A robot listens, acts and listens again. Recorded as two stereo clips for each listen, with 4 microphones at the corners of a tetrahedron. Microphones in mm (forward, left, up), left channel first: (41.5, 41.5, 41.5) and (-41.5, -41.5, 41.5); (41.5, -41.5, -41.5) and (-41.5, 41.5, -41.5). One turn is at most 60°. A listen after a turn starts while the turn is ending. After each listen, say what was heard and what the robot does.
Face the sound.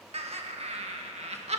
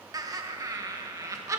The laughter: 160° right. Turn 60° right.
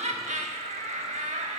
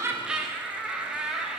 The laughter is now 140° right. Turn 60° right.
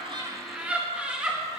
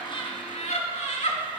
The laughter is now 55° right. Turn 55° right.
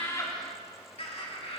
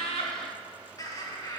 The laughter is now 15° left. Turn 15° left.
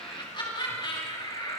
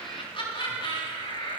Found it: laughter, straight ahead.